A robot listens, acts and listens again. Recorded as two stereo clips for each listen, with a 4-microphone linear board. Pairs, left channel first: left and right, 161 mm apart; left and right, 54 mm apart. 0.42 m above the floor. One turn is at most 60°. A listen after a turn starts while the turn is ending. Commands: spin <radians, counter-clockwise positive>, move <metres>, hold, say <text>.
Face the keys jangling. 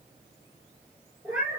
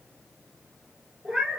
hold
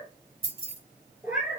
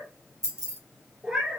spin -1.05
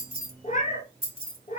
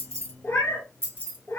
spin -0.70
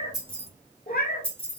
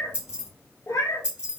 spin -0.26
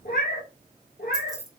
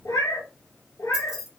say Found it: keys jangling, straight ahead, 1 to 2 m away.